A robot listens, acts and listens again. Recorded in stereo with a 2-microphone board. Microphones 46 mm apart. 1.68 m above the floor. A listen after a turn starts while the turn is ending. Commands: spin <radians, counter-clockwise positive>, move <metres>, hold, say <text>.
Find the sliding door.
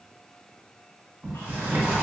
spin -0.79
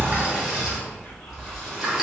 say Found it: a sliding door, straight ahead.